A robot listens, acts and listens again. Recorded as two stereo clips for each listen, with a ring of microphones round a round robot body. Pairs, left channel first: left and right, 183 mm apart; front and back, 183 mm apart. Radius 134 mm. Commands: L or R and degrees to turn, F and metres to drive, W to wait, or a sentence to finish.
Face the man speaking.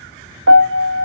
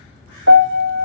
W
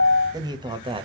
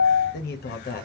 R30
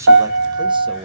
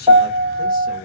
R35
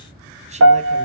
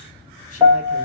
W
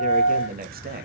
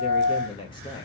R65
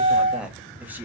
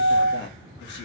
R10
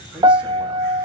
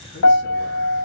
W
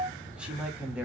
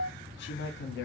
Found it: a man speaking, straight ahead, 1 to 2 m away.